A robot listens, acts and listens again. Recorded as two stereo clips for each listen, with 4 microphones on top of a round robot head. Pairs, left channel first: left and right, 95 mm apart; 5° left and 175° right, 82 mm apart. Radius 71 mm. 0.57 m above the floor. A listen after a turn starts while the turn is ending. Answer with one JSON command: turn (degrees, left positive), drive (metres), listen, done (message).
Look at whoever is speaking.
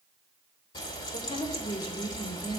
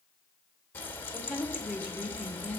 {"turn": 110}
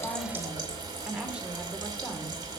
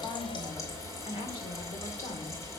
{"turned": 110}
{"turn": -10}
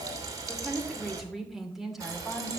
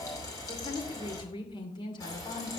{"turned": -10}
{"done": "Facing the woman speaking, 2 to 4 m away."}